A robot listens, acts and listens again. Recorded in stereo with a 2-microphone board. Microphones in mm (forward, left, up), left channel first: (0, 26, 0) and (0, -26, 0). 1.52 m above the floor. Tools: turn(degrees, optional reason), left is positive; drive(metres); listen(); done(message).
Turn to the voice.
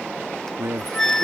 turn(degrees=-65, reason="The man speaking: about 65° right or 115° right.")
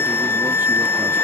listen()
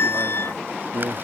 turn(degrees=-50, reason="So it is at 50° right.")
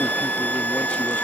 listen()
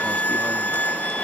listen()
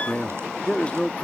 turn(degrees=25, reason="The man speaking is now 25° left.")
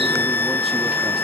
listen()
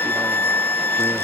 listen()
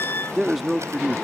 done("Facing the man speaking.")